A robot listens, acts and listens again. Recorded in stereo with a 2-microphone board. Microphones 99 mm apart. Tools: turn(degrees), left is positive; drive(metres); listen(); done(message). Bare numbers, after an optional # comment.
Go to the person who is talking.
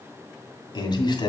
# The man speaking: about 50° left or 130° left.
turn(50)
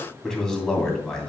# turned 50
drive(1.0)
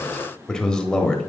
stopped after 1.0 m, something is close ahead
# The man speaking is now 10° left.
turn(10)
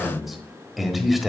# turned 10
done("I am next to the man speaking.")